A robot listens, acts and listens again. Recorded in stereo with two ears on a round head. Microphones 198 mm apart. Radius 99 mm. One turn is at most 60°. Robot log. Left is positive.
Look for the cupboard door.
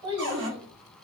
note: The cupboard door: about 55° right or 125° right.
cmd yaw -55
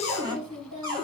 note: So it is at 20° right.
cmd yaw -20
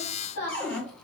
end: Found it: a cupboard door, straight ahead, 1 to 2 m away.